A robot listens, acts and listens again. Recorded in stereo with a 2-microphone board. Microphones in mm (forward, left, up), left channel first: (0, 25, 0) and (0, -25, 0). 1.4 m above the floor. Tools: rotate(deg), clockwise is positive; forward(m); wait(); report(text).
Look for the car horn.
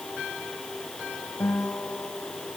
wait()
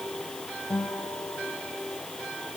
wait()
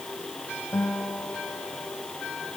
report("I can't make out a car horn to turn to.")